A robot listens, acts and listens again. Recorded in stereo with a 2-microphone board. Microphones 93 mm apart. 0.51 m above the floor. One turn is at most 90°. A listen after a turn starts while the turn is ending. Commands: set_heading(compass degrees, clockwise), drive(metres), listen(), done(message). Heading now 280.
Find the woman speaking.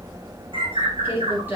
set_heading(300)
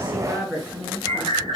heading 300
set_heading(270)
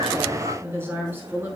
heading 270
set_heading(290)
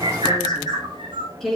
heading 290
done("Found it: a woman speaking, straight ahead, over 4 m away.")